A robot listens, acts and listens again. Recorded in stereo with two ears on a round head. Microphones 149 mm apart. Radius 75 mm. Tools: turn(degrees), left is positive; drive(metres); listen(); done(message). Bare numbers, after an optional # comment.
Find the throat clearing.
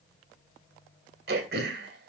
# The throat clearing: about 70° right or 110° right.
turn(-70)
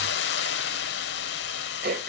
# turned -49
# So it is at 60° right.
turn(-60)
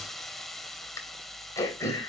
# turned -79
# The throat clearing is now 20° left.
turn(20)
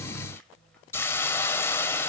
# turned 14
listen()
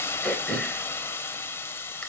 done("Found it: throat clearing, straight ahead.")